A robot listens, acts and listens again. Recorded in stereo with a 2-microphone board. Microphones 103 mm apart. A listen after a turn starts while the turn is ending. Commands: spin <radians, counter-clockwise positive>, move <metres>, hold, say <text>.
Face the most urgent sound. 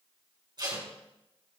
hold
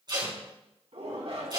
spin -1.57
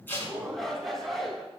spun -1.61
say Found it: a shout, straight ahead.